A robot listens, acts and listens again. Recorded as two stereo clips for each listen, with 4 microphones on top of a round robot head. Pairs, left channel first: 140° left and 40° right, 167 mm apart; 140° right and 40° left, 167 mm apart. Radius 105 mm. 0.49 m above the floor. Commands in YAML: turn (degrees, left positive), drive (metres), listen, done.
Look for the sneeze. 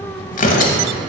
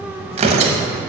listen: true
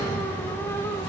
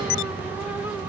listen: true
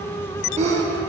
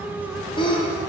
turn: -85
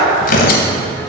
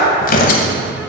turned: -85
done: "I heard a sneeze from this way, but can't make it out now."